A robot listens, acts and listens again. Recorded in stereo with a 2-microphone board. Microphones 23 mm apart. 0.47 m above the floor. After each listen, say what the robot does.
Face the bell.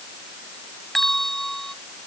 Turn 15° left.
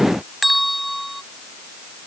Facing the bell.